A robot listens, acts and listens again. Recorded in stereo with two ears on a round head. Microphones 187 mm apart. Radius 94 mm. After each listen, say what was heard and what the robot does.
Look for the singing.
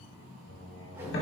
The singing: about 65° left or 115° left. Turn 65° left.
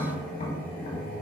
Facing the singing.